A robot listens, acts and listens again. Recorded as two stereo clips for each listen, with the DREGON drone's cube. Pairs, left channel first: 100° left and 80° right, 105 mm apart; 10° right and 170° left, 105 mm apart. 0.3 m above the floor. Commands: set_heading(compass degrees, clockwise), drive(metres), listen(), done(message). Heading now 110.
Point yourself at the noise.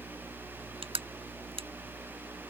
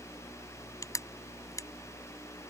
set_heading(175)
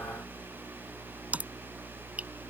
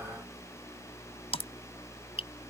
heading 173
done("Facing the crushing.")